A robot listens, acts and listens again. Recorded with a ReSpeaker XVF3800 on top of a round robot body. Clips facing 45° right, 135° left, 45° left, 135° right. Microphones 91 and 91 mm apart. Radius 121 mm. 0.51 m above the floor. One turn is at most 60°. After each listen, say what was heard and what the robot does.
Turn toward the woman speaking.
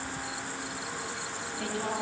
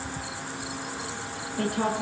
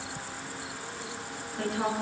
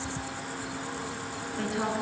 The woman speaking: 135° left. Turn 60° left.
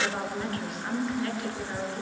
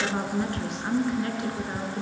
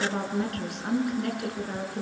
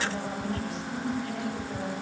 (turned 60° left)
The woman speaking is now 70° left. Turn 60° left.
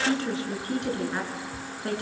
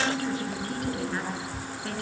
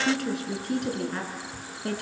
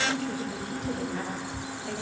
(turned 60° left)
The woman speaking is now 20° left. Turn 20° left.
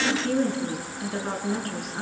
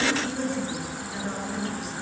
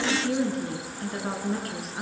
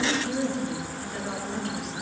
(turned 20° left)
Facing the woman speaking.